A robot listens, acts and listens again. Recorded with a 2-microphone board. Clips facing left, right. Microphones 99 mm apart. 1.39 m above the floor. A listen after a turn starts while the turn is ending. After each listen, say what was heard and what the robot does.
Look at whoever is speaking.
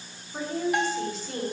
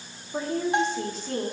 The woman speaking: about 50° right or 130° right. Turn 50° right.
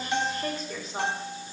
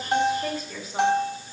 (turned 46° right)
Found it: a woman speaking, straight ahead, 2 to 4 m away.